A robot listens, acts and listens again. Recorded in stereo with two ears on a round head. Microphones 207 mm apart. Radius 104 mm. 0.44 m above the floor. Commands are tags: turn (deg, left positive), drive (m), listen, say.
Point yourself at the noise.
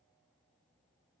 <listen/>
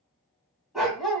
<turn deg="30"/>
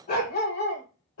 <turn deg="125"/>
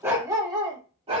<turn deg="-30"/>
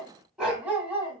<turn deg="-10"/>
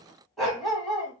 <say>Facing the dog barking, 1 to 2 m away.</say>